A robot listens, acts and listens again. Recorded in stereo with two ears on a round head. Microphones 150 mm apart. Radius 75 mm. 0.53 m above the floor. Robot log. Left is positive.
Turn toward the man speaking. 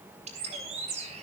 cmd idle
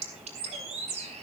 cmd idle
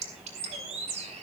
end: I can't make out a man speaking to turn to.